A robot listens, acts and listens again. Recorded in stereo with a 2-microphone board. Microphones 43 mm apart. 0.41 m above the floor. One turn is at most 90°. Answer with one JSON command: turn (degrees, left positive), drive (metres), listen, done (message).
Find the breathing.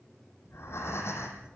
{"turn": 70}
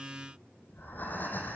{"turn": 45}
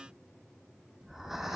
{"done": "Found it: breathing, straight ahead, 2 to 4 m away."}